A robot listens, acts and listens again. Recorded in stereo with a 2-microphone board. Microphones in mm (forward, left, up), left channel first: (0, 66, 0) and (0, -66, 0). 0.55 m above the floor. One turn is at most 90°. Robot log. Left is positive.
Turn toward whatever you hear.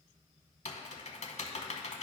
note: The typing on a keyboard: about 60° left or 120° left.
cmd yaw +60
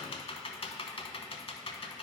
note: So it is at 50° left.
cmd yaw +50
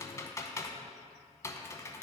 note: The typing on a keyboard is now 25° left.
cmd yaw +25
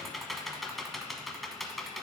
end: Found it: typing on a keyboard, straight ahead, under 1 m away.